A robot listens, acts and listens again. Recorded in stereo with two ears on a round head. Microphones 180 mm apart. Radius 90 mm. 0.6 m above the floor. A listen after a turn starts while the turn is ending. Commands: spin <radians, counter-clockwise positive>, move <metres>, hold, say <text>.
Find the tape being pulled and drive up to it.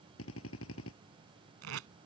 spin -1.57
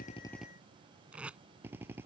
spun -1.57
move 1.0
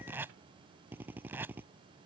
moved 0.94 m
spin -0.17
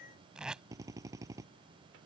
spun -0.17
move 1.0
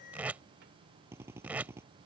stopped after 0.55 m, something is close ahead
spin -0.17
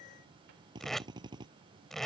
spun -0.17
say Arrived at the tape being pulled, straight ahead.